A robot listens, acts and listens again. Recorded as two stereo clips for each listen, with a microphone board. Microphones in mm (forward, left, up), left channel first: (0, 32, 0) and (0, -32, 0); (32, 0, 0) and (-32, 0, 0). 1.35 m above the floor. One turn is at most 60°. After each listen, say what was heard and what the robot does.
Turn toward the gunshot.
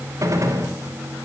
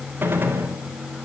The gunshot: 125° right. Turn 60° right.
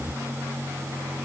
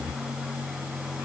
Nothing new. It was at 65° right. Turn 60° right.
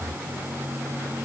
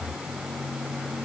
Facing where the gunshot came from. I can't hear it now.